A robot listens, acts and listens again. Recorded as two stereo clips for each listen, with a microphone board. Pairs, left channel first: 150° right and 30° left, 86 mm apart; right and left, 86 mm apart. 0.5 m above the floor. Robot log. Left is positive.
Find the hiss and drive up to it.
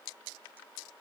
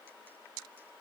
cmd idle
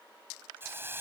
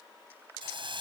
note: The hiss: 95° left.
cmd yaw +95
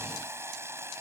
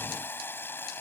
note: The hiss is now 25° right.
cmd yaw -25
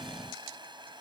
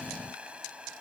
note: The hiss is now 15° left.
cmd yaw +15
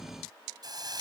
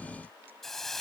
cmd fwd 1.0
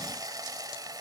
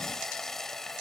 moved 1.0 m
cmd fwd 1.0
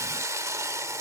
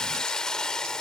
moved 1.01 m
note: The hiss is now 10° right.
cmd yaw -10
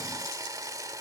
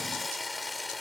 cmd fwd 1.0
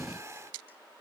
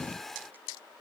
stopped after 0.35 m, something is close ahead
end: Arrived at the hiss, straight ahead.